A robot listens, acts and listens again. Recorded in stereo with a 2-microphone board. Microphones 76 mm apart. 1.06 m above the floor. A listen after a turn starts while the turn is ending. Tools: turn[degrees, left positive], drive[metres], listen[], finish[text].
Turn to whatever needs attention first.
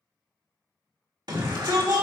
Thought: The shout: about 75° right or 105° right.
Action: turn[-75]
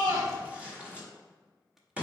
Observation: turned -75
Thought: So it is at 20° right.
Action: turn[-20]
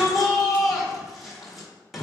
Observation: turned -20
Action: finish[Found it: a shout, straight ahead, 2 to 4 m away.]